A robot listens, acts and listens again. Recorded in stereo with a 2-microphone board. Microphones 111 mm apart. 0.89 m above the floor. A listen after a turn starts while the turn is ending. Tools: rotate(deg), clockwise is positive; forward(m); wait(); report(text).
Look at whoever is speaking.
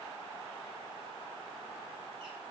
wait()
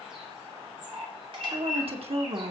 rotate(60)
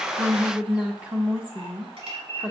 rotate(10)
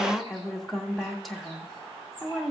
report("Found it: a woman speaking, straight ahead.")